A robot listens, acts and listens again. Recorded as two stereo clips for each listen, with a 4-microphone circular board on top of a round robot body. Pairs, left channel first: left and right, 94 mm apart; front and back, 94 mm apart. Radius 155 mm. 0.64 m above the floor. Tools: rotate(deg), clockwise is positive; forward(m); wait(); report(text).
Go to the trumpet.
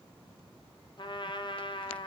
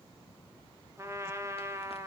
rotate(-120)
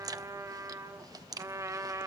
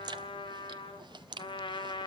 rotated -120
rotate(30)
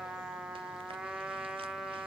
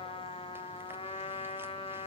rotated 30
forward(1.0)
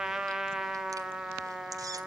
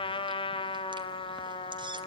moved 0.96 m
forward(1.0)
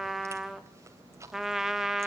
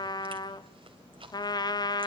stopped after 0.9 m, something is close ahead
report("Arrived at the trumpet, straight ahead.")